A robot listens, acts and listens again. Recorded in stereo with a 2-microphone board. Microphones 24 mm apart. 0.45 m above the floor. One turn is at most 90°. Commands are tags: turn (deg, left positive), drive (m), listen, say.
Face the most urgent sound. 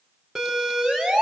<turn deg="-30"/>
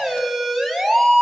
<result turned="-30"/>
<say>Facing the siren, over 4 m away.</say>